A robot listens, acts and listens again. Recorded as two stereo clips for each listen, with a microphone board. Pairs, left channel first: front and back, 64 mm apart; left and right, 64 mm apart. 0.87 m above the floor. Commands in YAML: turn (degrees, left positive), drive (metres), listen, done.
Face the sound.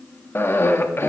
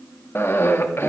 turn: 45
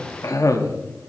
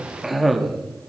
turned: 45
done: "Facing the cough, 1 to 2 m away."